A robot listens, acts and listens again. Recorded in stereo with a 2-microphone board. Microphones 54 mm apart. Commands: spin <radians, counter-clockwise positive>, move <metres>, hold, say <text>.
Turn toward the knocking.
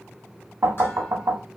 spin -1.13
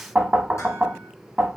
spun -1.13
spin -0.44
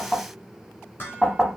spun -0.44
say Facing the knocking, 1 to 2 m away.